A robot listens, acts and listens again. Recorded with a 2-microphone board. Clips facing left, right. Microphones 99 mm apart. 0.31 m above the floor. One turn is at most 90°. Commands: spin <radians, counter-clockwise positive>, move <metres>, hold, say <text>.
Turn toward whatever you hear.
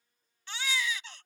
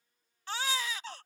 spin -0.70
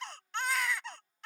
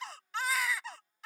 say Facing the baby crying.